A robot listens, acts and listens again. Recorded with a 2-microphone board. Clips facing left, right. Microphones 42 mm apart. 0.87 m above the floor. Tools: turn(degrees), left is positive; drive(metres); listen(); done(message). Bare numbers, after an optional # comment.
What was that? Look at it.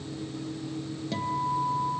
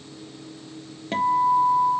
# The guitar: about 45° right or 135° right.
turn(-45)
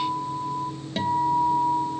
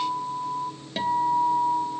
done("Facing the guitar, 1 to 2 m away.")